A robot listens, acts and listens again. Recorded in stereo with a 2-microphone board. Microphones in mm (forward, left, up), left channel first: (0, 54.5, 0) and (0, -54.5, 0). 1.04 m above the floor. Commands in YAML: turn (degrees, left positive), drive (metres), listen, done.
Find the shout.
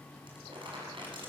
listen: true
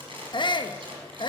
turn: 45
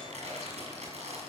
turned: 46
listen: true
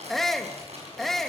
done: "Found it: a shout, straight ahead, 1 to 2 m away."